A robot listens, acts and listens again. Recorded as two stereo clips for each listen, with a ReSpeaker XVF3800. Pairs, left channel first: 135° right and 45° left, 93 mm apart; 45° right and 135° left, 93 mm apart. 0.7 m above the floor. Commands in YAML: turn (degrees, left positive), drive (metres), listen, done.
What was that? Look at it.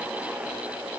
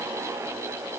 listen: true
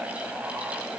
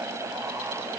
listen: true
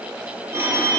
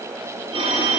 turn: 110
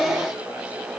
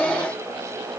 listen: true
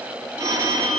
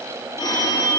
done: "Found it: a phone ringing, straight ahead, 1 to 2 m away."